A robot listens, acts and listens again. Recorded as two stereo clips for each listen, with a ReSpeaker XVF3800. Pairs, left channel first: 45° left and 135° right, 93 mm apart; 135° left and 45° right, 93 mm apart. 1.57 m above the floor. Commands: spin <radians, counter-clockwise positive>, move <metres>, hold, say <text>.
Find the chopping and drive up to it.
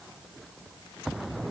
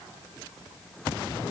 hold
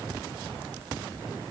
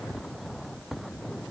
hold
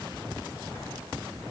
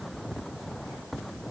say I can't make out chopping to turn to.